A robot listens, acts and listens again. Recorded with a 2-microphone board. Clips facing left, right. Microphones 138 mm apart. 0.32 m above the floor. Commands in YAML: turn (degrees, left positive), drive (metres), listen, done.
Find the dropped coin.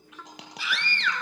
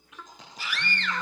turn: 70
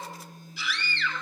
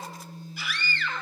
listen: true
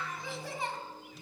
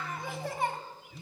done: "I heard a dropped coin, but can't make it out now. It was about straight ahead or 40° left."